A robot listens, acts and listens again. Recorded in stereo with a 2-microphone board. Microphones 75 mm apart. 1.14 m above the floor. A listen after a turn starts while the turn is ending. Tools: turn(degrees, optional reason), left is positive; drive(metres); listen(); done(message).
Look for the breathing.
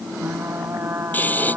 turn(degrees=25, reason="The breathing: about 25° left or 155° left.")
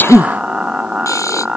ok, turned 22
turn(degrees=135, reason="So it is at 135° left.")
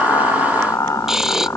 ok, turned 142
done("Found it: breathing, straight ahead.")